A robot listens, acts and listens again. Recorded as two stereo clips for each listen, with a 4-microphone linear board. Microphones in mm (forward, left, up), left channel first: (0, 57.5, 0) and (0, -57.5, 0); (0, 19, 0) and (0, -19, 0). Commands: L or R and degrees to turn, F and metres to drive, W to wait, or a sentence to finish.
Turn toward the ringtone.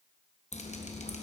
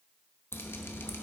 W
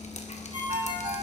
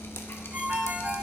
R55
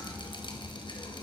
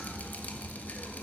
W
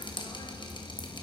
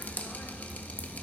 W
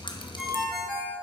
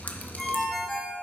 Facing the ringtone, 1 to 2 m away.